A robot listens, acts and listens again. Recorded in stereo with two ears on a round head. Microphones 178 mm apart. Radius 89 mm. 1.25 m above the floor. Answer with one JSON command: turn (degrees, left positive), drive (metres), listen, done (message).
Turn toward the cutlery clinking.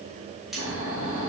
{"turn": 30}
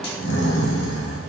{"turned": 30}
{"listen": true}
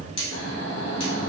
{"turn": 150}
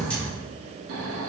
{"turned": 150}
{"listen": true}
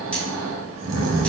{"listen": true}
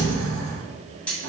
{"done": "Facing the cutlery clinking, 1 to 2 m away."}